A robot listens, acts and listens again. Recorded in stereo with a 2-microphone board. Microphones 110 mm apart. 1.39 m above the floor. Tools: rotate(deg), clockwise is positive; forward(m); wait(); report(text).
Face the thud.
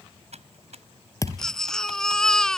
rotate(-30)
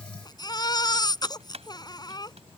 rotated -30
wait()
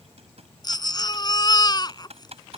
report("I heard a thud, but can't make it out now. It was about straight ahead or 120° left.")